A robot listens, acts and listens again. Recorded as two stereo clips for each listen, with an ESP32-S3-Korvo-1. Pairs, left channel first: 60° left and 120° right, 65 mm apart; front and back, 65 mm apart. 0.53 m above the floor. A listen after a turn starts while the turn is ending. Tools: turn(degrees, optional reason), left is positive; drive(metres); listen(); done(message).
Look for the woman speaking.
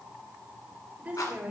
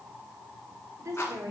turn(degrees=180, reason="The woman speaking: straight behind.")
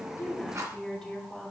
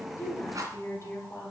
turn(degrees=-25, reason="The woman speaking is now 25° right.")
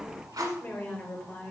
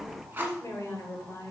turn(degrees=15, reason="The woman speaking is now 15° left.")
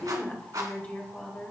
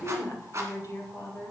done("Facing the woman speaking.")